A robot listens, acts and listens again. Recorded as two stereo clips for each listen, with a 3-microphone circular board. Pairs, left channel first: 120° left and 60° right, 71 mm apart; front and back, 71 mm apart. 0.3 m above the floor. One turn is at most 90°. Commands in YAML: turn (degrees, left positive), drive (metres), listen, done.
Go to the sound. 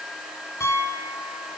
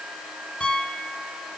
turn: 75
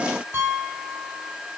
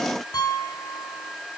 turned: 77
drive: 1.0
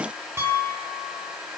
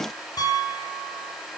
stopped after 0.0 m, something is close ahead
done: "Something is in my way. I am facing the piano but have not reached it."